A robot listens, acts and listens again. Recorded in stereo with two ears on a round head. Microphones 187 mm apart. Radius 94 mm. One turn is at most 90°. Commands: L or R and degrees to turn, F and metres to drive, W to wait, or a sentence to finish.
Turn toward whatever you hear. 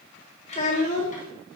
L40
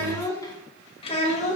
L35
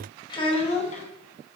L35
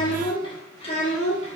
L35
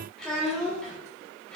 Found it: a child speaking, straight ahead.